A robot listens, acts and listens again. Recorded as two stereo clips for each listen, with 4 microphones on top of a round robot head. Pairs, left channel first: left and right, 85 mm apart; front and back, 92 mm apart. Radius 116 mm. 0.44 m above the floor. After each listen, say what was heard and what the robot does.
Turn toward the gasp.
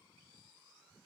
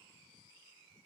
Keep listening.
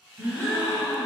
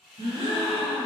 The gasp: 155° right. Turn 155° right.
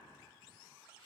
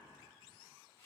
I heard a gasp from this way, but can't make it out now.